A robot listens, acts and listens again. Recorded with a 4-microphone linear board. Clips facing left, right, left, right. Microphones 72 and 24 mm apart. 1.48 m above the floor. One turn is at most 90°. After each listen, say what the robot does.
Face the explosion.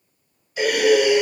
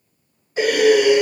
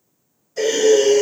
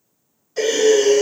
Keep listening.
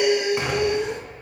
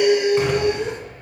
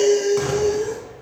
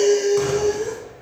Turn 30° left.
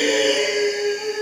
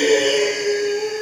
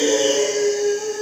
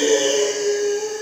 Keep listening.
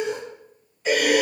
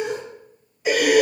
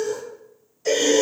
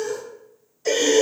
I heard an explosion, but can't make it out now. It was about 20° right or 140° left.